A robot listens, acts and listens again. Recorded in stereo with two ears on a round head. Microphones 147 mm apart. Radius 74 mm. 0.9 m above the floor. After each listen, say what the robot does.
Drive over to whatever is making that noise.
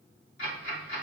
Turn 50° left.
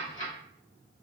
Turn 75° left.
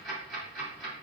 Drive 1.0 m forward.
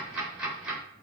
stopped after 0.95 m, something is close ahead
Arrived at the ticking, straight ahead.